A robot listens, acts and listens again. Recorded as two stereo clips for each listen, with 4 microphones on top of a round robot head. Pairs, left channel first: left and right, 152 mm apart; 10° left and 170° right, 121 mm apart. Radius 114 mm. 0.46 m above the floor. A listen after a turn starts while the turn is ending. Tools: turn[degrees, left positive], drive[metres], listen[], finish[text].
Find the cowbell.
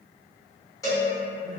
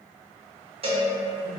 Thought: The cowbell: 155° left.
Action: turn[155]
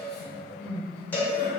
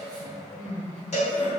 Thought: The cowbell is now 15° left.
Action: turn[15]
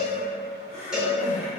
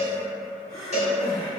Action: finish[Facing the cowbell.]